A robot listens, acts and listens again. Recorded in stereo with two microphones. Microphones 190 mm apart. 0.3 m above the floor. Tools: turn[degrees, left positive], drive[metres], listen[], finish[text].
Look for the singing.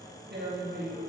Action: listen[]
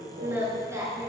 Thought: The singing: about 15° right or 165° right.
Action: turn[-15]
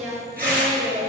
Action: turn[-30]
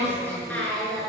Action: finish[Facing the singing.]